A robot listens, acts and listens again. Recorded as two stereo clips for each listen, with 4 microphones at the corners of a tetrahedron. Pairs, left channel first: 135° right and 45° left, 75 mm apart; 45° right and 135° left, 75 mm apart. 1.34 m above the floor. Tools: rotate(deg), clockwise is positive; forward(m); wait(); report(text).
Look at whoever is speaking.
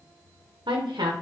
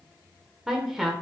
rotate(-45)
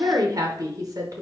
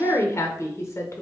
report("Facing the woman speaking, under 1 m away.")